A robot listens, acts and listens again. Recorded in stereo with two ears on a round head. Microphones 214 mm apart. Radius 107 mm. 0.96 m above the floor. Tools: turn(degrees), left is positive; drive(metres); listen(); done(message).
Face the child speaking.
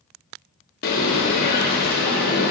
listen()
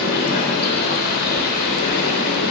listen()
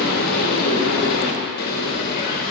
done("I can't make out a child speaking to turn to.")